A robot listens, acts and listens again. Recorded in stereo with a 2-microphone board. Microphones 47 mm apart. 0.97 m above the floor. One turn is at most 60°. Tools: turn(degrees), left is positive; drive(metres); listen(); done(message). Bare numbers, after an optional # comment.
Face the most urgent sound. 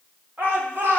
# The shout: about 50° right or 130° right.
turn(-50)
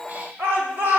# So it is at 80° right.
turn(-60)
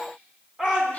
# The shout is now 20° right.
turn(-20)
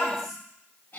listen()
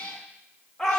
# The shout is now 10° left.
turn(10)
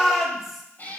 done("Found it: a shout, straight ahead.")